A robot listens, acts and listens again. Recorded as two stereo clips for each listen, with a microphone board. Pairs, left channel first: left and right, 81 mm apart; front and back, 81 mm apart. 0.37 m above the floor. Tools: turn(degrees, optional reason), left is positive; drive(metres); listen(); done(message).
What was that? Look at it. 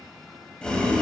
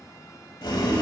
turn(degrees=15, reason="The boiling: 15° left.")
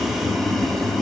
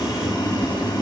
done("Found it: boiling, straight ahead.")